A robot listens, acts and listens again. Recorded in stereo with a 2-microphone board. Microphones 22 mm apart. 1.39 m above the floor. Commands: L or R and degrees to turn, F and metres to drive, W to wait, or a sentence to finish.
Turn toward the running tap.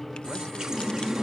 R30
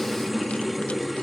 Found it: a running tap, straight ahead.